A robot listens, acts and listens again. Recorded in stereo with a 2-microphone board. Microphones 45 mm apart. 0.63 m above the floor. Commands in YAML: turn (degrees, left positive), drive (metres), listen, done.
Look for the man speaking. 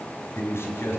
turn: 70
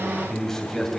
done: "Found it: a man speaking, straight ahead, 2 to 4 m away."